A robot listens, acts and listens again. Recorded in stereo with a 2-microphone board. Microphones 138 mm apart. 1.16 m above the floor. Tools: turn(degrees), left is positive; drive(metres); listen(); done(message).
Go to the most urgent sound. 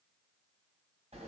listen()
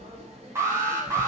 turn(degrees=-20)
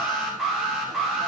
drive(metres=1.0)
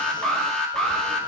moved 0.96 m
drive(metres=1.0)
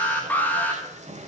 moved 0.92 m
turn(degrees=10)
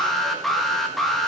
drive(metres=1.0)
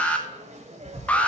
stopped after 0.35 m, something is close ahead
turn(degrees=10)
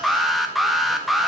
done("I am next to the alarm.")